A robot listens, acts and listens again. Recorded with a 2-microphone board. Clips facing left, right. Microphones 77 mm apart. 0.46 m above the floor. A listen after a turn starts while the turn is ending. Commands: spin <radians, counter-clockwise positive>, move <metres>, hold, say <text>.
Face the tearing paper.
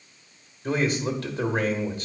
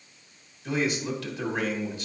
hold
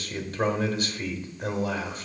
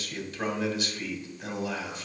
hold
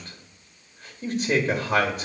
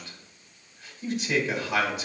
say I can't make out tearing paper to turn to.